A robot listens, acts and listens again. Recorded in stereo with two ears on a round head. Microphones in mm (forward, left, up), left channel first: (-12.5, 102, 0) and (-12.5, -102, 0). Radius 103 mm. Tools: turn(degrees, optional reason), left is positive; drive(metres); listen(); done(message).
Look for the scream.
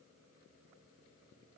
listen()
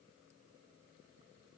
listen()
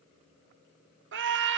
turn(degrees=-55, reason="The scream: about 55° right or 125° right.")
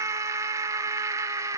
turn(degrees=-15, reason="So it is at 15° right.")
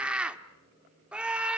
done("Found it: a scream, straight ahead.")